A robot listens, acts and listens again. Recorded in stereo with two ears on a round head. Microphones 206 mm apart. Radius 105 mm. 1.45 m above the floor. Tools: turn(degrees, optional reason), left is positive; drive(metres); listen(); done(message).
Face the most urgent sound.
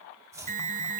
turn(degrees=-35, reason="The alarm: about 35° right or 145° right.")
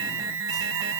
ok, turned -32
turn(degrees=-110, reason="So it is at 110° right.")
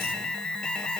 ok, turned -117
done("Found it: an alarm, straight ahead.")